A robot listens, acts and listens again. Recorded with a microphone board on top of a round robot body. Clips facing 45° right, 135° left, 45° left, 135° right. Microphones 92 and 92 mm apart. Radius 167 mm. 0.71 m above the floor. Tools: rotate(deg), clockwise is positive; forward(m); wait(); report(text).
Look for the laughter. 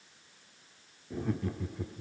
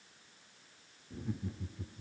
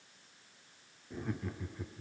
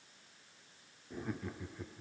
rotate(45)
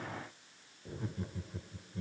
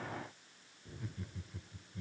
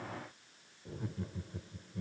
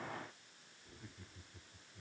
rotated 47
rotate(-10)
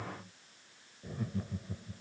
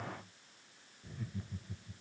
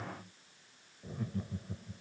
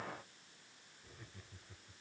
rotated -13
report("Found it: laughter, straight ahead.")